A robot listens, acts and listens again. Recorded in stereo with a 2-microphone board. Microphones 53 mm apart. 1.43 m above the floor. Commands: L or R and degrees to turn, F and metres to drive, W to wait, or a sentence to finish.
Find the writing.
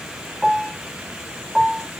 W
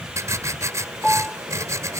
R60
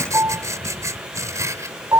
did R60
R60
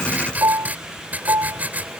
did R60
R30
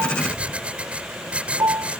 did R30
R20
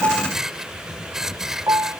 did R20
R10
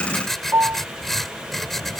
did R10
Found it: writing, straight ahead.